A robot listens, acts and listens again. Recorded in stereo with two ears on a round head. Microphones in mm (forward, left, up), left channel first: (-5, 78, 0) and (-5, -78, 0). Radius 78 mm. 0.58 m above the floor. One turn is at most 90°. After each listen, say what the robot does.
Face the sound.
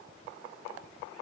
Keep listening.
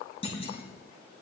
Turn 35° left.
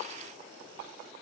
Keep listening.
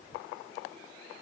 I heard a clunk, but can't make it out now. It was about straight ahead or 110° left.